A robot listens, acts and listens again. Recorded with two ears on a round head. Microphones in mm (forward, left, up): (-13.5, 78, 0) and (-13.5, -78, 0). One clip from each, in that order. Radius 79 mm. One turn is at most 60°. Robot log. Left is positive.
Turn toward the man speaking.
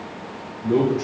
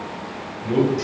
note: The man speaking: about 50° right or 130° right.
cmd yaw -50
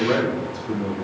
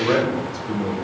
note: So it is at 30° right.
cmd yaw -30
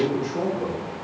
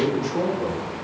note: The man speaking is now 35° right.
cmd yaw -35
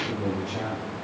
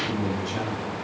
note: The man speaking is now 30° right.
cmd yaw -30
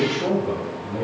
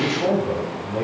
note: The man speaking is now 35° right.
cmd yaw -35
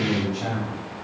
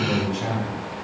note: The man speaking is now 10° right.
cmd yaw -10
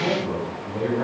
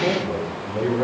end: Found it: a man speaking, straight ahead.